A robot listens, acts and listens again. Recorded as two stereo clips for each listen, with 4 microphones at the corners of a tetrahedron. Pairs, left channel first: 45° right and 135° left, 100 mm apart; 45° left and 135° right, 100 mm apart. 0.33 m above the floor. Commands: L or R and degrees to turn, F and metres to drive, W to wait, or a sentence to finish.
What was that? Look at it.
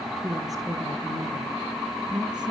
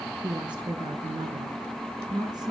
L180
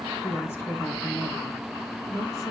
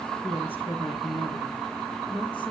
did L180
L15
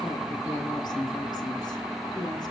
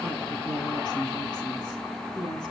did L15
Facing the woman speaking, over 4 m away.